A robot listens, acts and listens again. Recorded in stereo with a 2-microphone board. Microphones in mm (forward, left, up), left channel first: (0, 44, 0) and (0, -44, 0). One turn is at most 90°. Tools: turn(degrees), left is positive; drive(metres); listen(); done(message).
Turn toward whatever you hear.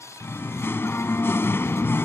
turn(degrees=30)
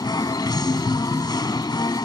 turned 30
turn(degrees=90)
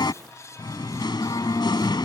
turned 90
turn(degrees=60)
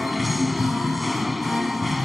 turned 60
done("Found it: singing, straight ahead.")